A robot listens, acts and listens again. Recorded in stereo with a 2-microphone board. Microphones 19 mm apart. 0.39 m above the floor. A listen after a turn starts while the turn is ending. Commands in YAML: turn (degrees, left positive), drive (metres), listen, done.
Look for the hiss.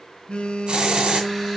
turn: -60
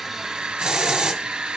turn: -55
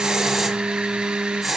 done: "Facing the hiss, 1 to 2 m away."